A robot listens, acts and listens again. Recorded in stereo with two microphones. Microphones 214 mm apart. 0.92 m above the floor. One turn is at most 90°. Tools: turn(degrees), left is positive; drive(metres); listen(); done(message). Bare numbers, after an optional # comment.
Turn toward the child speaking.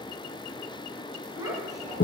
# The child speaking: about 15° right or 165° right.
turn(-15)
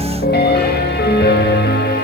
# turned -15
listen()
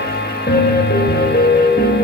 listen()
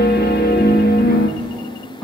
turn(30)
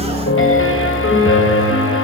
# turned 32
listen()
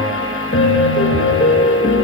listen()
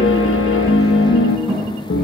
# So it is at 25° right.
turn(-25)
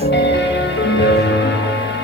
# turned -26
listen()
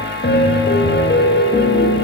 listen()
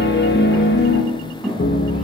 done("Facing the child speaking.")